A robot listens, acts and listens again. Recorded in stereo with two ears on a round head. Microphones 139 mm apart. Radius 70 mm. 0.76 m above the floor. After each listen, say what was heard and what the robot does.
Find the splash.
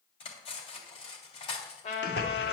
The splash: about 70° left or 110° left. Turn 70° left.
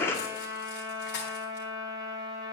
So it is at 15° left. Turn 15° left.
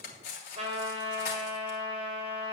Facing where the splash came from. I can't hear it now.